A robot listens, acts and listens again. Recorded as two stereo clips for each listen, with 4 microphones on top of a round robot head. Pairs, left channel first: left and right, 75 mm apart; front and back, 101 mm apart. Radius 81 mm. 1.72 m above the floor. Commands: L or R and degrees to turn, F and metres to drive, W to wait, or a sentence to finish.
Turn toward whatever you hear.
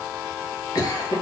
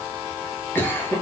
L65
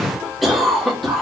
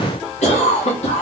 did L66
Found it: a cough, straight ahead, 1 to 2 m away.